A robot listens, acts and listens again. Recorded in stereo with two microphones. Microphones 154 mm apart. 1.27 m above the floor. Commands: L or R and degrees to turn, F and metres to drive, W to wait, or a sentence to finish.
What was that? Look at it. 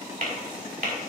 R65
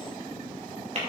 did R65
R50
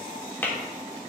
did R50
L15
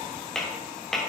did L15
Found it: tapping, straight ahead.